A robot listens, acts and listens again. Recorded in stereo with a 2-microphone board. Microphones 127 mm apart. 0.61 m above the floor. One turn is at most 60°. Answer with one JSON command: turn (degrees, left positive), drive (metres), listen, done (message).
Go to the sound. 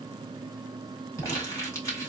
{"turn": 25}
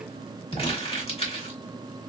{"turn": 60}
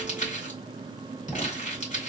{"turn": 60}
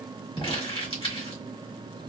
{"turn": 45}
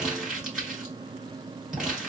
{"drive": 1.0}
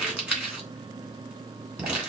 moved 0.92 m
{"turn": -10}
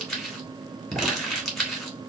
{"drive": 1.0}
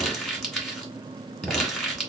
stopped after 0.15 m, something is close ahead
{"done": "Arrived at the crumpling, straight ahead."}